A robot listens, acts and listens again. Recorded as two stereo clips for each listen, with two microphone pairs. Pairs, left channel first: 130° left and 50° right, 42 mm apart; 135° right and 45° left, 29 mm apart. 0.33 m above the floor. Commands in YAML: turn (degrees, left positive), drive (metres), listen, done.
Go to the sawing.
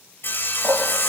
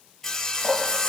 turn: 155
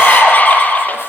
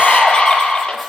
listen: true
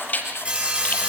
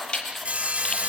drive: 1.0
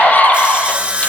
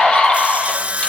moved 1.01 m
turn: 10
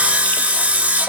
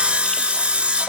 drive: 1.0
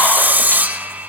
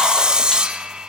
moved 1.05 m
turn: -10
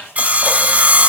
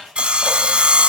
drive: 1.0
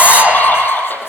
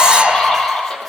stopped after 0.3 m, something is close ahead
listen: true
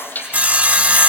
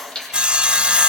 done: "Arrived at the sawing, straight ahead."